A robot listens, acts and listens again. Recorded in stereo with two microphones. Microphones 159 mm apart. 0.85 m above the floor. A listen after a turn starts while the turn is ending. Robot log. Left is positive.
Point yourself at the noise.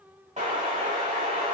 note: The explosion: about 45° right or 135° right.
cmd yaw -45
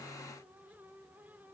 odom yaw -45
cmd idle
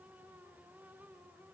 end: I heard an explosion, but can't make it out now. It was about straight ahead or 90° right.